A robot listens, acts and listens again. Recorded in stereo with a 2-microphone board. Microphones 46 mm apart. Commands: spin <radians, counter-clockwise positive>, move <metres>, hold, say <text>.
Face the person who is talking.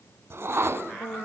spin 0.96
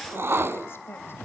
hold
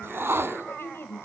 spin 1.05
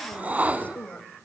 spin 0.61
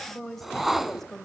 say Found it: a woman speaking, straight ahead, 2 to 4 m away.